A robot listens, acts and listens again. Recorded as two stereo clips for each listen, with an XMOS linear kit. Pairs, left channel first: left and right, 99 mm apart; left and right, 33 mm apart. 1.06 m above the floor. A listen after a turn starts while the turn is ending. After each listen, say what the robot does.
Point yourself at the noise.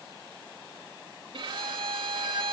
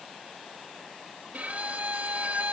Turn 65° right.
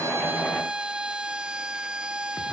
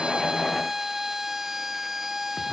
Turn 10° right.
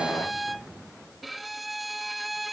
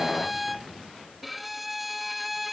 Found it: a violin, straight ahead.